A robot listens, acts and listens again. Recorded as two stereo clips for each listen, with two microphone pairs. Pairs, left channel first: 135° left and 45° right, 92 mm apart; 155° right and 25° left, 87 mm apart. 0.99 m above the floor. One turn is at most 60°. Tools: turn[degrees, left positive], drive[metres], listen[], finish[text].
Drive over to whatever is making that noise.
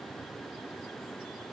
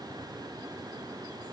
Action: listen[]
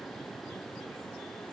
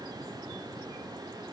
Action: listen[]
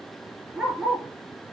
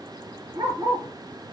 Thought: The dog barking: 45° left.
Action: turn[45]
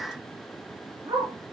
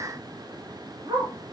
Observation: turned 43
Action: drive[1.0]
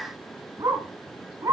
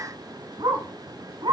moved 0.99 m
Action: drive[1.0]
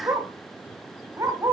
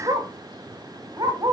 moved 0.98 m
Action: drive[1.0]
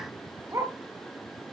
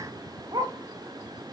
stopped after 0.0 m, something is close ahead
Thought: The dog barking is now 10° left.
Action: turn[10]
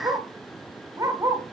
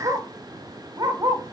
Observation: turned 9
Action: finish[I am next to the dog barking.]